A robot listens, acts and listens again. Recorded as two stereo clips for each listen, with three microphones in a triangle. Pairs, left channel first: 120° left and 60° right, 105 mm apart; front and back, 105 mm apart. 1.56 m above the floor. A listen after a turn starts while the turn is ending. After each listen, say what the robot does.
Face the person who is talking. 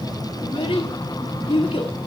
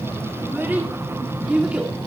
Turn 100° left.
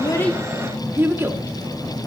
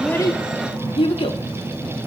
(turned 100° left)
Facing the child speaking, 2 to 4 m away.